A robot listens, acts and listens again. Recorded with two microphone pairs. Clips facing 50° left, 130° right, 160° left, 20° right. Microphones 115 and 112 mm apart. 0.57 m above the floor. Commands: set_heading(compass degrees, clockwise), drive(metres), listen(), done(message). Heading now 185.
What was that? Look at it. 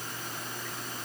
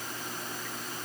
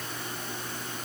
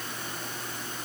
listen()
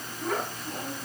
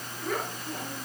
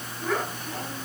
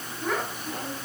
set_heading(120)
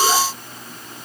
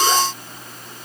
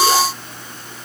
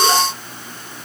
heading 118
listen()
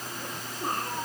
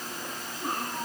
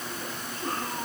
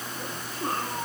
set_heading(128)
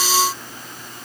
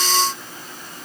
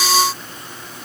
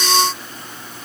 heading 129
listen()
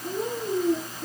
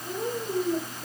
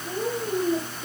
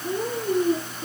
done("Facing the child speaking.")